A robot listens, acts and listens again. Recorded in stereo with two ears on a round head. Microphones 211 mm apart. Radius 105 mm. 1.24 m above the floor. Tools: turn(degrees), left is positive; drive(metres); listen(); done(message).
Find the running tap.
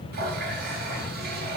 turn(degrees=-45)
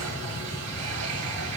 turn(degrees=-90)
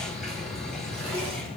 listen()
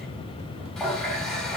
done("Found it: a running tap, straight ahead.")